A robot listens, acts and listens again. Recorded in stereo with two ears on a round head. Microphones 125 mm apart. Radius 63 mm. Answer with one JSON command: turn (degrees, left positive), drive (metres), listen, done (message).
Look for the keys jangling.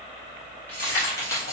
{"turn": 25}
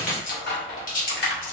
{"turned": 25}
{"turn": 115}
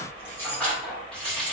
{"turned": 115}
{"done": "Found it: keys jangling, straight ahead."}